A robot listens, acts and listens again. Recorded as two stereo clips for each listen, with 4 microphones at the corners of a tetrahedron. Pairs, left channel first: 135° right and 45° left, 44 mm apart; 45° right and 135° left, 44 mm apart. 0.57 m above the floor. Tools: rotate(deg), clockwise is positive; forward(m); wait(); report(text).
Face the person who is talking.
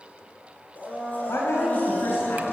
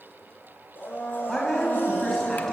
rotate(125)
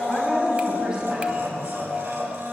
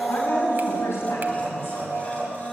rotate(25)
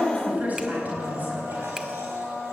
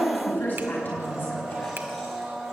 report("Facing the woman speaking, over 4 m away.")